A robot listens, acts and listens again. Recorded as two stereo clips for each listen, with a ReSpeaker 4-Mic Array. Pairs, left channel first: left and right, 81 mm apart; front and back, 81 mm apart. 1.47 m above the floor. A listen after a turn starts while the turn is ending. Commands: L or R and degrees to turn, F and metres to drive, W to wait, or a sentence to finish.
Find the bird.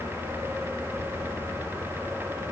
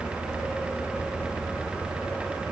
W
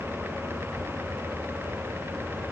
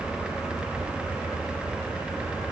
W
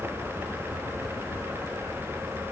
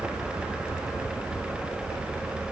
I can't make out a bird to turn to.